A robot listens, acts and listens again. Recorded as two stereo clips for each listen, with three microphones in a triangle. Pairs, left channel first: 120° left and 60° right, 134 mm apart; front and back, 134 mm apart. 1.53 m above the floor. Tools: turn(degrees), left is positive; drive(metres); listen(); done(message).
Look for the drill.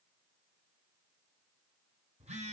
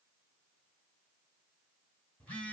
listen()
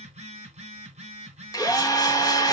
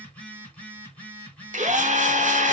turn(degrees=180)
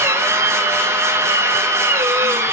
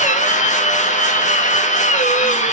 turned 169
turn(degrees=10)
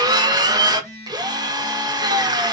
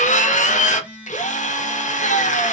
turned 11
done("Facing the drill, 1 to 2 m away.")